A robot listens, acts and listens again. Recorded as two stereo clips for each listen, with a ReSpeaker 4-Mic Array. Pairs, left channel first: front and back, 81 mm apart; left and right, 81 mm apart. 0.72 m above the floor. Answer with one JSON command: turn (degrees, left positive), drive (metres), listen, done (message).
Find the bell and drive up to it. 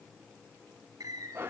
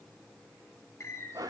{"listen": true}
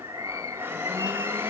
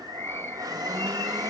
{"listen": true}
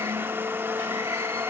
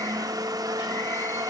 {"done": "I can't make out a bell, only a bird and a blender."}